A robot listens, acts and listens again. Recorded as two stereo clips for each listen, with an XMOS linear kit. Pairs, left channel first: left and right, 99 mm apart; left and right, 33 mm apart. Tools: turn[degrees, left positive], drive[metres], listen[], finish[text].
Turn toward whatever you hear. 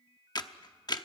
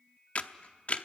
Thought: The camera shutter: about 45° left or 135° left.
Action: turn[45]
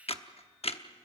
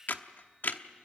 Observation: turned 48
Thought: So it is at 85° left.
Action: turn[85]
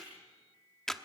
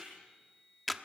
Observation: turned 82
Action: finish[Facing the camera shutter.]